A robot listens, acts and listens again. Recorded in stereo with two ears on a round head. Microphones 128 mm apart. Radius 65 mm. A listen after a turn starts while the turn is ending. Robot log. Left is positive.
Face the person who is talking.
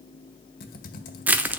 cmd idle
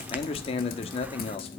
note: The man speaking: about 45° left or 135° left.
cmd yaw +45
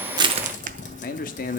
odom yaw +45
note: So it is at 85° left.
cmd yaw +85
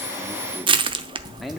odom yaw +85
cmd idle
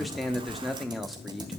end: Found it: a man speaking, straight ahead.